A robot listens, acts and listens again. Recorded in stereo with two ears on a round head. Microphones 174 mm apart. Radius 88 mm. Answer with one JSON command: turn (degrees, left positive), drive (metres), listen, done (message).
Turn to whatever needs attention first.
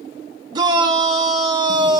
{"turn": -25}
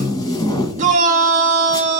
{"turn": -130}
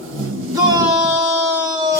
{"turn": -20}
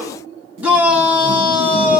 {"done": "Found it: a shout, straight ahead, 1 to 2 m away."}